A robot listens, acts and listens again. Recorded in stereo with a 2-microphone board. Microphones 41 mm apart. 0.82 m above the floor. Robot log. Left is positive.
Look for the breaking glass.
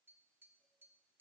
cmd idle
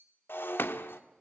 note: The breaking glass: about 65° left or 115° left.
cmd yaw +65
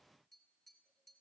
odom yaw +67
cmd idle
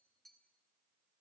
end: I heard breaking glass, but can't make it out now. It was about straight ahead or 50° left.